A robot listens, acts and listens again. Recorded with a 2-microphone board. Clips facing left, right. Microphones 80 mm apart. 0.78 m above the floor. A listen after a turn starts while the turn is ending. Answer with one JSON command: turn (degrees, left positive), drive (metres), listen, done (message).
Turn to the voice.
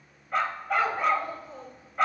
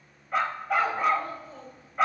{"turn": 25}
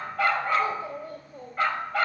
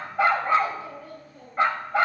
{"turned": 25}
{"turn": 130}
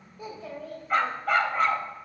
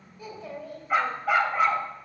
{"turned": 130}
{"turn": -20}
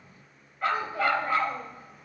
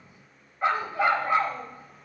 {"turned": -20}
{"listen": true}
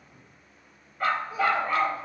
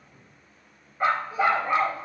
{"listen": true}
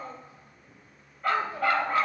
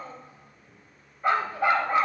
{"done": "Facing the child speaking, 2 to 4 m away."}